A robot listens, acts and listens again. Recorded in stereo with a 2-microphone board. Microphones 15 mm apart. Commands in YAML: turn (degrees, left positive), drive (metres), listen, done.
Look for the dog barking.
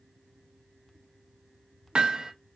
listen: true
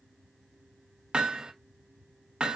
listen: true
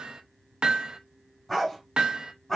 turn: 25
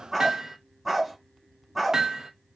done: "Found it: a dog barking, straight ahead."